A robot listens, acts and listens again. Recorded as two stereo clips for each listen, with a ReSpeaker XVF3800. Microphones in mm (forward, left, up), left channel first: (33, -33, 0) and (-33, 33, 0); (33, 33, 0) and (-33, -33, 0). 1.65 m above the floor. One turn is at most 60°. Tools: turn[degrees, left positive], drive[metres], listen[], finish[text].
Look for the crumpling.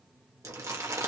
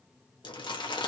Thought: The crumpling: 80° left.
Action: turn[60]
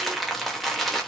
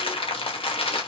Thought: The crumpling is now 45° left.
Action: turn[45]
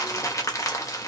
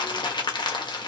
Thought: The crumpling is now 10° left.
Action: turn[10]
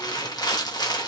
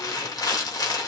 Action: finish[Facing the crumpling, 1 to 2 m away.]